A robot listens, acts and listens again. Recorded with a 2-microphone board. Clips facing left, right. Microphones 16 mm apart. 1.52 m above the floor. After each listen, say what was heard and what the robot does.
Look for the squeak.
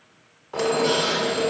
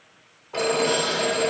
The squeak: about 30° left or 150° left. Turn 30° left.
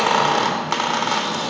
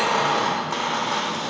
So it is at 115° left. Turn 115° left.
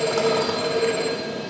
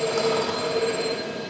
Found it: a squeak, straight ahead, under 1 m away.